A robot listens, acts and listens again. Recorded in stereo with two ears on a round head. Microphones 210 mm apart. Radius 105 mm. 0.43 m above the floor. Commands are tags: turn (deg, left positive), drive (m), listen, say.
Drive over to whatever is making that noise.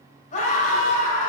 <turn deg="30"/>
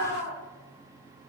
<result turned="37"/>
<turn deg="110"/>
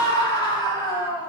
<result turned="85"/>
<turn deg="20"/>
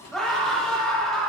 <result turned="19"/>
<drive m="1.0"/>
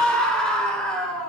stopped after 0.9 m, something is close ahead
<say>I am next to the scream.</say>